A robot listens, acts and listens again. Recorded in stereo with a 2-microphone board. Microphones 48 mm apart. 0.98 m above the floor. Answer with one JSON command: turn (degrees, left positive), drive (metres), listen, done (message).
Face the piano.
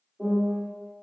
{"turn": -20}
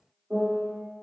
{"turn": -145}
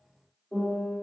{"turn": 10}
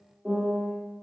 {"done": "Facing the piano, 1 to 2 m away."}